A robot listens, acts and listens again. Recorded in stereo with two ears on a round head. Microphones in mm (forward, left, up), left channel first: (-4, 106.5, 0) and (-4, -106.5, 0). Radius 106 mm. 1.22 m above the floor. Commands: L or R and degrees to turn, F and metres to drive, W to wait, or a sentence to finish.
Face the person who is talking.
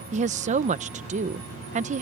R30
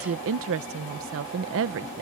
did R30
R115
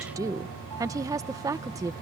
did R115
R15
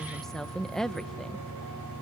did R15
Facing the woman speaking.